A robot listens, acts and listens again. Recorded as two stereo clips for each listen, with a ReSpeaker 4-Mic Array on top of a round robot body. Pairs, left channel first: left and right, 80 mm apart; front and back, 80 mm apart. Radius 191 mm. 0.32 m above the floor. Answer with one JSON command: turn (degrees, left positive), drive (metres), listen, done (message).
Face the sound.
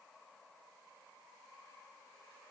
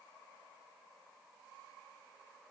{"listen": true}
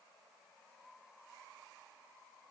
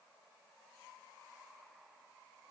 {"listen": true}
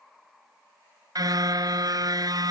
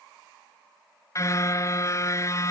{"turn": -50}
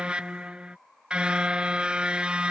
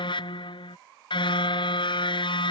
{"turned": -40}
{"turn": -10}
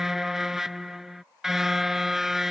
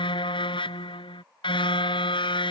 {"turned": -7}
{"done": "Found it: a car horn, straight ahead."}